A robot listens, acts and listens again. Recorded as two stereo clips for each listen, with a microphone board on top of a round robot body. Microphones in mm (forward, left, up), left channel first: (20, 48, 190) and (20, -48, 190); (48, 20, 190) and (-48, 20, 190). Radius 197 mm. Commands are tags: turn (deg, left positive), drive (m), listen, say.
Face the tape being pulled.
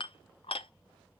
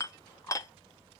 <listen/>
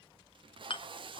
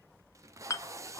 <turn deg="-120"/>
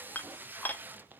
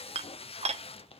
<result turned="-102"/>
<turn deg="-20"/>
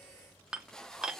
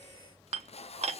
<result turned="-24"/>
<say>Found it: tape being pulled, straight ahead, under 1 m away.</say>